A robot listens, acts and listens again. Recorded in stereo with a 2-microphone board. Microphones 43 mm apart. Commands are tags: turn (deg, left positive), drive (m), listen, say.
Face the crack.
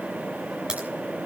<turn deg="-20"/>
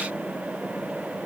<listen/>
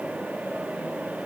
<say>I heard a crack, but can't make it out now. It was about straight ahead or 140° right.</say>